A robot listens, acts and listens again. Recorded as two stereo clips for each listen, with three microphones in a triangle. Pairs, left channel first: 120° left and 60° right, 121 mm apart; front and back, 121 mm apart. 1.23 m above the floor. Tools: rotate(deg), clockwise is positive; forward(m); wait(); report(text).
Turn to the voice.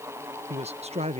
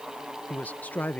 rotate(75)
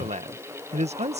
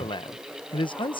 rotate(45)
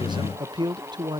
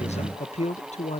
rotate(10)
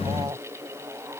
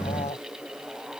report("Found it: a man speaking, straight ahead.")